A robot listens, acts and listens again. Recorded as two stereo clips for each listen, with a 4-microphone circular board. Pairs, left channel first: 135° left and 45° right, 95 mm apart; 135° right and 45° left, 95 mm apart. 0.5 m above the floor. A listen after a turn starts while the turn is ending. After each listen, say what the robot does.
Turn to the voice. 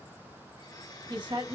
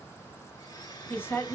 Turn 70° right.
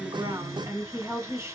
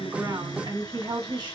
Turn 15° left.
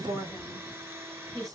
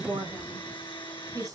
Found it: a woman speaking, straight ahead, 2 to 4 m away.